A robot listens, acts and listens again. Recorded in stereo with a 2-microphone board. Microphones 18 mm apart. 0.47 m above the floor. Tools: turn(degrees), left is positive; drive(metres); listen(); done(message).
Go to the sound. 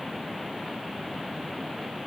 listen()
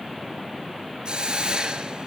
turn(degrees=-50)
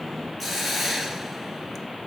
drive(metres=1.0)
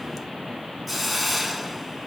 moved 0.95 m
drive(metres=1.0)
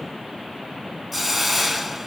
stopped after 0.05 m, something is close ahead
done("I am next to the hiss.")